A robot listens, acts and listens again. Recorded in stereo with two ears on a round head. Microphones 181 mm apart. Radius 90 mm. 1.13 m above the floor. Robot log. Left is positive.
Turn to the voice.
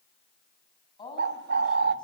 note: The woman speaking: about 25° left or 155° left.
cmd yaw +25
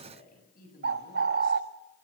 note: So it is at 130° left.
cmd yaw +130
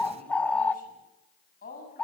note: The woman speaking is now 45° left.
cmd yaw +45
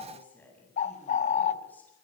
note: The woman speaking is now 10° left.
cmd yaw +10
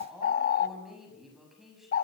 end: Found it: a woman speaking, straight ahead, over 4 m away.